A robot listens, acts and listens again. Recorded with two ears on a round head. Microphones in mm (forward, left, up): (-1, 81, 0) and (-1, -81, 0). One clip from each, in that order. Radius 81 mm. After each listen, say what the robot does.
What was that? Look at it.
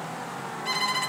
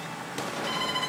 Turn 40° left.
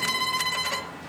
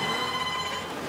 Turn 100° left.
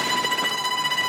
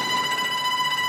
Turn 15° left.
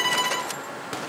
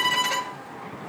Found it: a violin, straight ahead.